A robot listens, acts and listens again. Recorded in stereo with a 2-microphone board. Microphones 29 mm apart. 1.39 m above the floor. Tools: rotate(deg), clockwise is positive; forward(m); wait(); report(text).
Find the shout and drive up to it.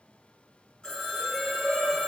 rotate(30)
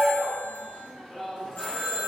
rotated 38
rotate(-10)
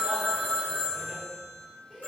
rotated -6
wait()
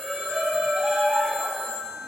forward(1.0)
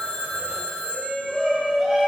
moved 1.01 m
forward(1.0)
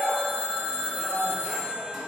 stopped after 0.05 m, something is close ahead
report("Arrived at the shout, straight ahead.")